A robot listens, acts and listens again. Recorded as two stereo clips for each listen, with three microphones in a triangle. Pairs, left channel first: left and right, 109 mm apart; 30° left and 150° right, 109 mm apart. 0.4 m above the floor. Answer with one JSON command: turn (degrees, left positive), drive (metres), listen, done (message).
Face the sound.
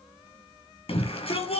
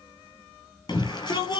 {"turn": 75}
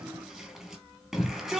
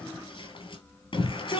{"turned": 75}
{"done": "Found it: a shout, straight ahead, over 4 m away."}